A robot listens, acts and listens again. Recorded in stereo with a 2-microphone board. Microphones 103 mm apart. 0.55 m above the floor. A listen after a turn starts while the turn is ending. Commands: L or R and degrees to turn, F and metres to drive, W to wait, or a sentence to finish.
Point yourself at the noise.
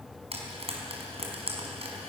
R90
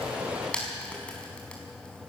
L10
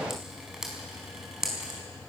Facing the frying.